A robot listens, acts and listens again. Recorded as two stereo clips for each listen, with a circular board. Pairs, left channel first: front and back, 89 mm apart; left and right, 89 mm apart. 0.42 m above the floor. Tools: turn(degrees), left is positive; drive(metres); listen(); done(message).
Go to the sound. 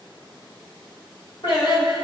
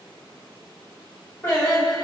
turn(degrees=30)
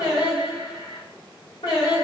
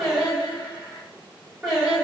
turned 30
drive(metres=1.0)
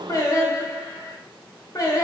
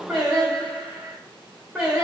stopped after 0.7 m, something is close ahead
done("I am next to the singing.")